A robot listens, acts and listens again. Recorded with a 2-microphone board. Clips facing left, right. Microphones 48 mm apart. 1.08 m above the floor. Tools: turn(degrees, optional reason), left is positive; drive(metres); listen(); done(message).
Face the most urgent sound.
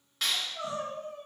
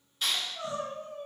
turn(degrees=30, reason="The crying: about 30° left or 150° left.")
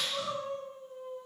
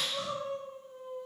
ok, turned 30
done("Found it: crying, straight ahead, 1 to 2 m away.")